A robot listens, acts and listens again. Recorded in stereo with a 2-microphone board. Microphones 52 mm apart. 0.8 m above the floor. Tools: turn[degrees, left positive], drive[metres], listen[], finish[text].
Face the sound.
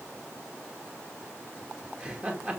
Thought: The laughter: about 20° right or 160° right.
Action: turn[-20]
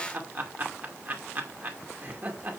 Thought: So it is at 140° right.
Action: turn[-140]
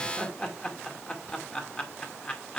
Thought: The laughter is now 20° left.
Action: turn[20]
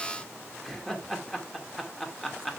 Action: finish[Found it: laughter, straight ahead, 2 to 4 m away.]